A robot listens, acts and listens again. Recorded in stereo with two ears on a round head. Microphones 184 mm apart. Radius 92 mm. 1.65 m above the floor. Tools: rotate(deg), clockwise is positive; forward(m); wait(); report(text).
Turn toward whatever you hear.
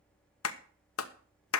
rotate(-75)
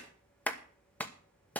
rotate(-10)
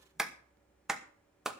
report("Facing the clap, 1 to 2 m away.")